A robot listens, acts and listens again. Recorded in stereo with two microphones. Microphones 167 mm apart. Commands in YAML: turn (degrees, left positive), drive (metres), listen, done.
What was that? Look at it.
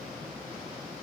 listen: true
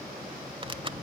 turn: -35
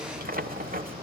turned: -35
turn: -110
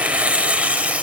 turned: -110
turn: -10
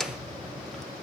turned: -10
done: "Found it: tearing paper, straight ahead, under 1 m away."